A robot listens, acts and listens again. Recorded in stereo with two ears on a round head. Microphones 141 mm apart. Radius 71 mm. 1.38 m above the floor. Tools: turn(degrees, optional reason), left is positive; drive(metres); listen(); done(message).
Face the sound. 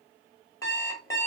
turn(degrees=20, reason="The alarm clock: about 20° left or 160° left.")
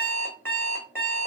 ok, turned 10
turn(degrees=30)
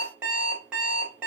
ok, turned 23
turn(degrees=-10, reason="So it is at 10° right.")
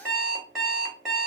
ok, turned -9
done("Found it: an alarm clock, straight ahead, 1 to 2 m away.")